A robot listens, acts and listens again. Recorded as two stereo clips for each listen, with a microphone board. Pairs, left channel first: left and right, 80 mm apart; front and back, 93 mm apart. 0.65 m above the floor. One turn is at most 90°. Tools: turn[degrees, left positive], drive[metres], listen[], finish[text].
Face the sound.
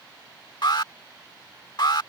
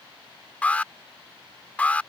Thought: The alarm: 70° left.
Action: turn[70]
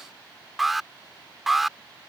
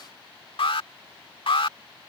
Action: finish[Found it: an alarm, straight ahead.]